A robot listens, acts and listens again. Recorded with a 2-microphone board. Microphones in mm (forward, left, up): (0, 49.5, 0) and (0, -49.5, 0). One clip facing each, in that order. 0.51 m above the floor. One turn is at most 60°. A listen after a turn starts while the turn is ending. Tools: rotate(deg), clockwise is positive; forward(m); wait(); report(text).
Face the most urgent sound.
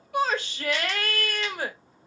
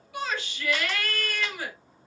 rotate(-60)
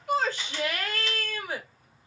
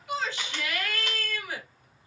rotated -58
rotate(-35)
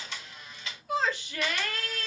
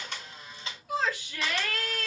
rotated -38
report("Found it: a shout, straight ahead.")